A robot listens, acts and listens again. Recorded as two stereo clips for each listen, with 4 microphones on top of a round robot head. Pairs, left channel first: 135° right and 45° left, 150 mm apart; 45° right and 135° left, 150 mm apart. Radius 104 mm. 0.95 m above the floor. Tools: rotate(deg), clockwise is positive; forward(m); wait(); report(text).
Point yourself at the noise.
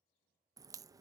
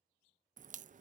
rotate(-110)
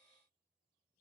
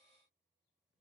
report("Facing where the crack came from. I can't hear it now.")